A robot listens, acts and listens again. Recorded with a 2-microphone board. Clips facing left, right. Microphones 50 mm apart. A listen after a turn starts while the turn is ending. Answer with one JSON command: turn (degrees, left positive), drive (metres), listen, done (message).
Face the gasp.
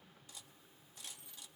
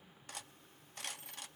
{"listen": true}
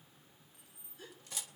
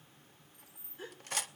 {"turn": -30}
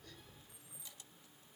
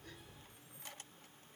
{"listen": true}
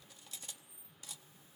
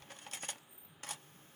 {"done": "I heard a gasp, but can't make it out now. It was about straight ahead or 120° right."}